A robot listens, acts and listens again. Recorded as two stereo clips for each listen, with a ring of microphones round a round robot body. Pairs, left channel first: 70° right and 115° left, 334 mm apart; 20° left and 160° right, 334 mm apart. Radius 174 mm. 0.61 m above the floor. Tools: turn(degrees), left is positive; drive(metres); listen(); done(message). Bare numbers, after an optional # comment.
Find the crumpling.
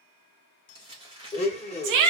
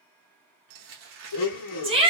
# The crumpling: 170° right.
turn(-170)
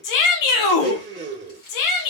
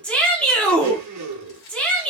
listen()
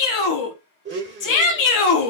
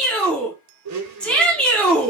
listen()
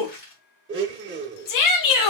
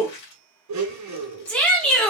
done("Found it: crumpling, straight ahead.")